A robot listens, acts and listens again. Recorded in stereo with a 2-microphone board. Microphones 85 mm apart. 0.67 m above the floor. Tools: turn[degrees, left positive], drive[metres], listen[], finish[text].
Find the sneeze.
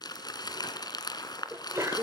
Thought: The sneeze: about 30° right or 150° right.
Action: turn[-30]
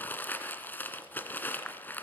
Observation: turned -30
Action: listen[]
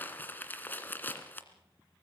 Action: finish[I heard a sneeze, but can't make it out now. It was about straight ahead or 120° right.]